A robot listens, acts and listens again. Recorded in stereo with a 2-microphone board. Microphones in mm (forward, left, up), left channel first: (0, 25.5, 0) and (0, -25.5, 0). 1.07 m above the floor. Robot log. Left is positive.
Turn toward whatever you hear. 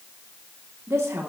note: The woman speaking: about 65° right or 115° right.
cmd yaw -65
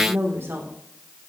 note: So it is at 60° right.
cmd yaw -60
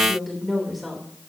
end: Found it: a woman speaking, straight ahead, 2 to 4 m away.